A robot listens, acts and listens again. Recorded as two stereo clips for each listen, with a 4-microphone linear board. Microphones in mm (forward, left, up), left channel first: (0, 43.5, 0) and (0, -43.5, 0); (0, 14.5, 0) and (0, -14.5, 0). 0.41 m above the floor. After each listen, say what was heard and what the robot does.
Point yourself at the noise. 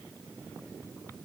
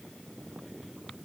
Keep listening.
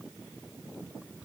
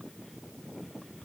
Keep listening.
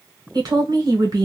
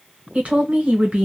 The woman speaking: about 45° right or 135° right. Turn 45° right.
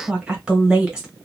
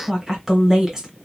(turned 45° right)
So it is at 15° right. Turn 15° right.
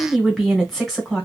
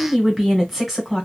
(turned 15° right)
Facing the woman speaking.